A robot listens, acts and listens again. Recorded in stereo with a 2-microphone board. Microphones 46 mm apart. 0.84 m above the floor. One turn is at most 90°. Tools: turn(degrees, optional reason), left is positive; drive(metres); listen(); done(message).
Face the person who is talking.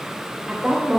turn(degrees=-30)
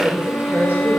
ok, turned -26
turn(degrees=-90, reason="So it is at 140° right.")
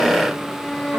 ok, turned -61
turn(degrees=-80, reason="Nothing new. It was at 80° right.")
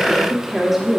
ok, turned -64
done("Found it: a woman speaking, straight ahead.")